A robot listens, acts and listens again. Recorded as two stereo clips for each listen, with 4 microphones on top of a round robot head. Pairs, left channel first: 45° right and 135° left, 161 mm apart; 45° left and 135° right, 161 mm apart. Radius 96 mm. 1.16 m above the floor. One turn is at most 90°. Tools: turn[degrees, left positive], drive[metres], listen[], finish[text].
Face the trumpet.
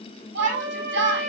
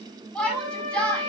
Thought: The trumpet: 175° left.
Action: turn[90]
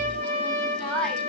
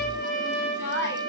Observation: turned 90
Thought: The trumpet is now 80° left.
Action: turn[80]
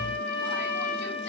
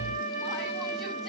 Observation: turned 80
Action: finish[Facing the trumpet.]